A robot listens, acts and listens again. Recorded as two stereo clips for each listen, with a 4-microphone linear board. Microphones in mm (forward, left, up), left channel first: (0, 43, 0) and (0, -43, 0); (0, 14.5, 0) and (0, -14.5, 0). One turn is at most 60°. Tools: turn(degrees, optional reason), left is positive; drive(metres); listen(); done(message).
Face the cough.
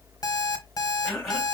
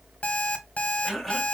turn(degrees=-30)
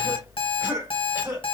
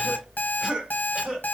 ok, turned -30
turn(degrees=-60, reason="So it is at 145° right.")
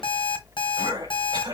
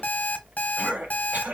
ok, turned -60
turn(degrees=-60, reason="The cough is now 110° right.")
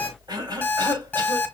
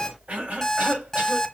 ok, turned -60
turn(degrees=-60, reason="The cough is now 60° right.")
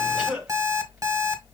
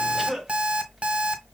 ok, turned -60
done("Facing the cough.")